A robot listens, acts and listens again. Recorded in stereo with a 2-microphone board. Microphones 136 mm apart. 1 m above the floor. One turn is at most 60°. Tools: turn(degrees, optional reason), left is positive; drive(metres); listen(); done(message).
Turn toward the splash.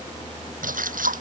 turn(degrees=-60)
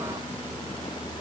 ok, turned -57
turn(degrees=-35, reason="Nothing new. It was at 35° right.")
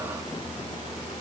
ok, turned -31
done("Facing where the splash came from. I can't hear it now.")